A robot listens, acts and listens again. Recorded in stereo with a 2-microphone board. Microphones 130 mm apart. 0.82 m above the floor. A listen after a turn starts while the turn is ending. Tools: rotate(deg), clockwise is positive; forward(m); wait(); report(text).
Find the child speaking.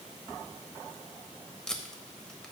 wait()
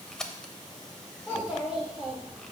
rotate(30)
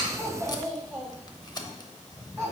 rotate(160)
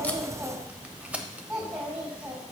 report("Found it: a child speaking, straight ahead.")